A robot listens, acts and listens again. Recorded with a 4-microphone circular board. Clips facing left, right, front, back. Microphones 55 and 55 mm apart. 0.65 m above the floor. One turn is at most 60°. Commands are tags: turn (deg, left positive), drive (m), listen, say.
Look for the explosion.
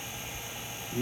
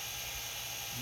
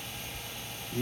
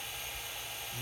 <listen/>
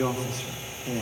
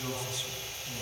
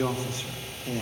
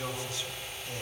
<listen/>
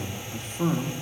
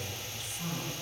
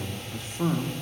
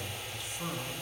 <say>I can't make out an explosion, only a man speaking.</say>